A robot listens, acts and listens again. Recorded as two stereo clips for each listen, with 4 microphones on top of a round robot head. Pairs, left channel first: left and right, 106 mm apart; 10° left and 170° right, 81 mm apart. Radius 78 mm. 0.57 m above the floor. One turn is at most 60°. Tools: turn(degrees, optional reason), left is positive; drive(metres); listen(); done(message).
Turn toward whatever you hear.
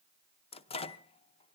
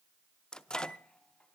turn(degrees=60, reason="The microwave: 90° left.")
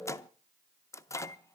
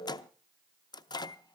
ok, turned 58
turn(degrees=30, reason="The microwave is now 30° left.")
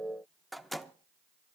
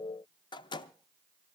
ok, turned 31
done("Found it: a microwave, straight ahead.")